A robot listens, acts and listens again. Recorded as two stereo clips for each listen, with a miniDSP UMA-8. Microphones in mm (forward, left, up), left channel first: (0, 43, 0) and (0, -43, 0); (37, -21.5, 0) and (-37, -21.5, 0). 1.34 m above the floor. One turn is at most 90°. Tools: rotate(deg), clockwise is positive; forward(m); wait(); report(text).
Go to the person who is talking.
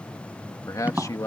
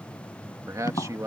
rotate(-90)
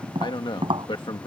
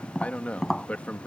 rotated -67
rotate(-70)
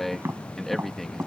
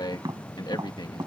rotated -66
forward(1.0)
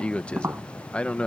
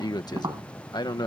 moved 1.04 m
rotate(-15)
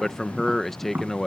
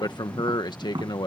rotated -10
forward(1.0)
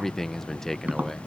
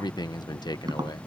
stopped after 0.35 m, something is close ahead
report("Arrived at the man speaking, straight ahead.")